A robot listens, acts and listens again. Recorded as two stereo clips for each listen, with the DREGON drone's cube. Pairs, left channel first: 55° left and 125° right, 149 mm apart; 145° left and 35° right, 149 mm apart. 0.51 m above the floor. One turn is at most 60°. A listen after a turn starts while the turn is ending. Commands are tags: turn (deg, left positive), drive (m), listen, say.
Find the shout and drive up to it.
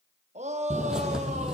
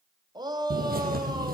<turn deg="-60"/>
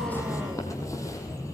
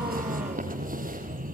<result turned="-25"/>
<turn deg="-60"/>
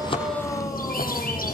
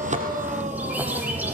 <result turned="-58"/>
<turn deg="-10"/>
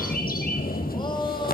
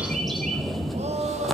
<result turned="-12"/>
<drive m="1.0"/>
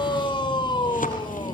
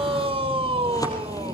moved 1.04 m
<drive m="1.0"/>
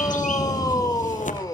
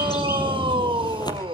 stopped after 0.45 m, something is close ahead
<say>Arrived at the shout, straight ahead.</say>